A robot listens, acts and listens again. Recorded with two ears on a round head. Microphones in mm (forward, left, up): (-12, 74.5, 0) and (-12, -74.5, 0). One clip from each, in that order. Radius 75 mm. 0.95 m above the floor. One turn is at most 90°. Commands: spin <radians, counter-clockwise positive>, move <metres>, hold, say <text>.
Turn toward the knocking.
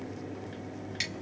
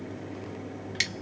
hold
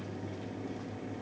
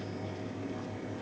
hold
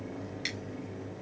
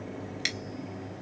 say I can't make out knocking.